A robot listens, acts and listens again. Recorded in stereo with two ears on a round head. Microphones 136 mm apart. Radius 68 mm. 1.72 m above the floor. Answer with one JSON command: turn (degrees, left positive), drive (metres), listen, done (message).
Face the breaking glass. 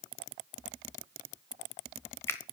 {"listen": true}
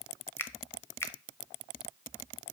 {"listen": true}
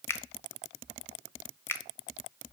{"done": "I can't make out breaking glass to turn to."}